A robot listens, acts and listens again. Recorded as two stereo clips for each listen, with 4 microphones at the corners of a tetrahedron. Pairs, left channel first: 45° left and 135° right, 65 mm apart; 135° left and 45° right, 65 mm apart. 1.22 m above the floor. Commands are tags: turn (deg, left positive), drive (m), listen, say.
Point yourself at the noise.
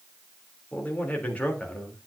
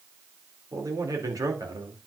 <turn deg="-25"/>
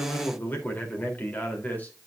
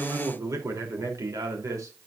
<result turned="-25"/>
<turn deg="-15"/>
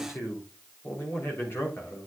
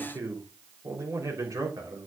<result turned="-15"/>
<turn deg="-10"/>
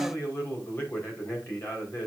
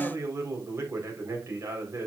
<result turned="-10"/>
<say>Found it: a man speaking, straight ahead, 2 to 4 m away.</say>